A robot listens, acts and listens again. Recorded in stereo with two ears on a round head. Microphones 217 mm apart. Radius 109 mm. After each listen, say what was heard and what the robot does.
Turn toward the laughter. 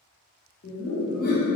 The laughter: about 35° left or 145° left. Turn 35° left.
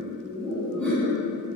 Found it: laughter, straight ahead.